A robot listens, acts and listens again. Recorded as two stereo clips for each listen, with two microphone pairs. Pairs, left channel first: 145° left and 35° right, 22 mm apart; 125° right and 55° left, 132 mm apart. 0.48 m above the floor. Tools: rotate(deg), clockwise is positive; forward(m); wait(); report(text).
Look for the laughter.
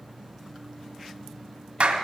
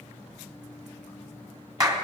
wait()
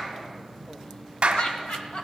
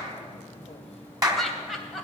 rotate(-145)
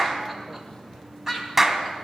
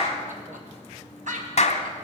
rotate(-40)
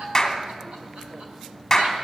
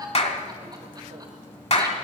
wait()
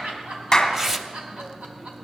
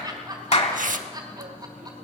report("Facing the laughter.")